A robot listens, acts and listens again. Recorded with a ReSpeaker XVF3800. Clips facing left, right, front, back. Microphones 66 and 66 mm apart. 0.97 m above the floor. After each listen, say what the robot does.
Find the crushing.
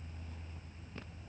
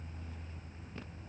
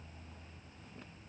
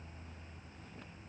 Keep listening.
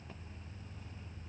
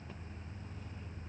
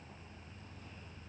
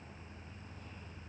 Keep listening.
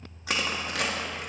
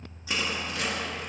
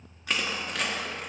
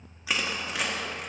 Turn 95° left.
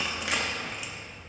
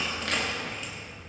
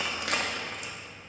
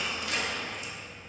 Turn 10° left.
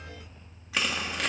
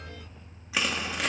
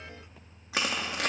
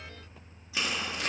Found it: crushing, straight ahead.